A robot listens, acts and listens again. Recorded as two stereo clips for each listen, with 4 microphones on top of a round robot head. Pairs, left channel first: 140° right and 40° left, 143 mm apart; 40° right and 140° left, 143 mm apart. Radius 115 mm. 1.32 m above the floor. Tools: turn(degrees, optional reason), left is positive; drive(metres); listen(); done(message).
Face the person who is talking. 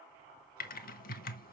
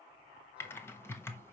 listen()
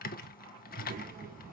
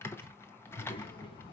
turn(degrees=15, reason="The child speaking: 15° left.")
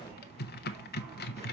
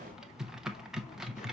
listen()
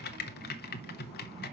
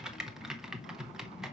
done("Found it: a child speaking, straight ahead, 2 to 4 m away.")